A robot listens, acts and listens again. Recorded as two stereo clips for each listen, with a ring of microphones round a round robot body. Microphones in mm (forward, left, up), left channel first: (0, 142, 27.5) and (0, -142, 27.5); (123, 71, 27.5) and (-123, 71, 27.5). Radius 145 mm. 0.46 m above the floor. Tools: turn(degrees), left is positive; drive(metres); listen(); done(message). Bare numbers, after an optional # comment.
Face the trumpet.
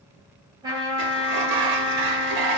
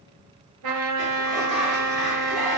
# The trumpet: 165° right.
turn(-165)
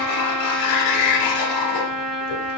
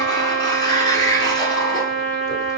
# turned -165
done("Found it: a trumpet, straight ahead.")